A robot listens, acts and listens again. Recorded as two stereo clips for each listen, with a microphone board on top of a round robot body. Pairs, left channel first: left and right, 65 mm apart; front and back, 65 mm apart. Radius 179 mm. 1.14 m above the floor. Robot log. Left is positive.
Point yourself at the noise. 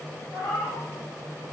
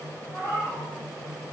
note: The cat meowing: 60° left.
cmd yaw +60
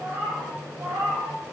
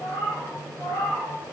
note: The cat meowing is now 55° right.
cmd yaw -55
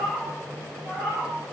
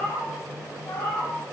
note: The cat meowing is now 15° right.
cmd yaw -15
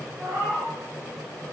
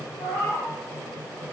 note: The cat meowing is now 10° right.
cmd yaw -10
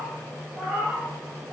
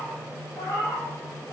end: Facing the cat meowing.